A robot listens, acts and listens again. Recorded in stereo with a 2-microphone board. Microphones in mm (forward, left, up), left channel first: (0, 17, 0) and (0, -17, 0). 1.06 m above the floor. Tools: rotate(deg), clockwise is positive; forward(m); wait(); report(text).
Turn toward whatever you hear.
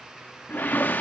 rotate(-65)
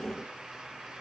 wait()
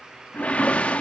rotate(-45)
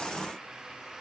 wait()
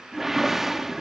rotate(10)
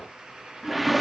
report("Found it: a whoosh, straight ahead.")